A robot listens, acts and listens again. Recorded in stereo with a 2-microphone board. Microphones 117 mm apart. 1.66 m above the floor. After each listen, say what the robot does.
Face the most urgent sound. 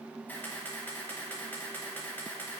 Keep listening.
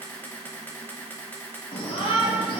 Turn 60° left.
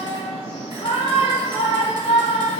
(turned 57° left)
Turn 65° left.
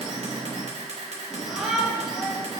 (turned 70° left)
Found it: a shout, straight ahead, 2 to 4 m away.